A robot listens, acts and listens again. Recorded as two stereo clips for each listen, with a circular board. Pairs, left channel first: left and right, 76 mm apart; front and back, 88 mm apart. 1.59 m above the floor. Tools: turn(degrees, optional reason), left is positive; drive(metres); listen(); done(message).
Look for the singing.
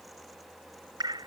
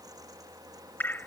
listen()
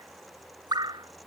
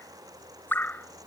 listen()
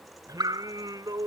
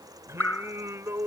turn(degrees=-120, reason="The singing: 120° right.")
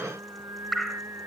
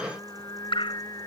turn(degrees=-40, reason="The singing is now 40° right.")
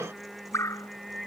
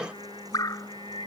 done("Facing the singing.")